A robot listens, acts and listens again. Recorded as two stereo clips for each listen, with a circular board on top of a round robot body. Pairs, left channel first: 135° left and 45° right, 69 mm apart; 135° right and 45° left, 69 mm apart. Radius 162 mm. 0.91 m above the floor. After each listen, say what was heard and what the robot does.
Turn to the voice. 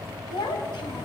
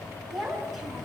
The child speaking: 135° left. Turn 135° left.
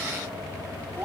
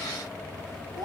The child speaking is now 30° left. Turn 30° left.
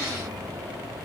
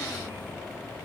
Keep listening.
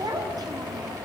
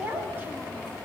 The child speaking is now 15° right. Turn 15° right.
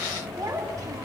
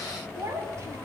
Found it: a child speaking, straight ahead, over 4 m away.